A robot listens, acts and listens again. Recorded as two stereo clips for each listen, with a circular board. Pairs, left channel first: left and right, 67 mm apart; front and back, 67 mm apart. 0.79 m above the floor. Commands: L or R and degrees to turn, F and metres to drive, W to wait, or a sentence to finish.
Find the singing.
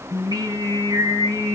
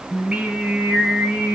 R110
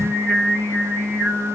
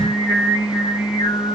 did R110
R15
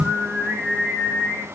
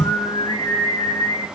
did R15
Found it: singing, straight ahead.